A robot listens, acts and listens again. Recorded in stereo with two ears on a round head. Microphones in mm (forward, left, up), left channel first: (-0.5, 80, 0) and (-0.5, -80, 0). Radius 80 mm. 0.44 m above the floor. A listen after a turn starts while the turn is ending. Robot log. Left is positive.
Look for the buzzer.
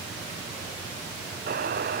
note: The buzzer: about 55° right or 125° right.
cmd yaw -55
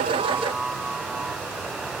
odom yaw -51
end: Facing the buzzer.